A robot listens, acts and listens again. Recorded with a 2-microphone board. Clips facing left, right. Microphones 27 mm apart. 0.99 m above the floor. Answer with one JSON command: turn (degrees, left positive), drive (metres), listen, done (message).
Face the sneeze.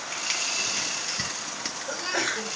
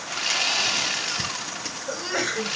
{"turn": -30}
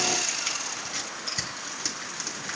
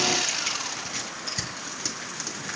{"listen": true}
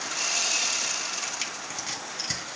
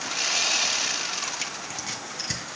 {"done": "I heard a sneeze, but can't make it out now. It was about 20° left or 140° right."}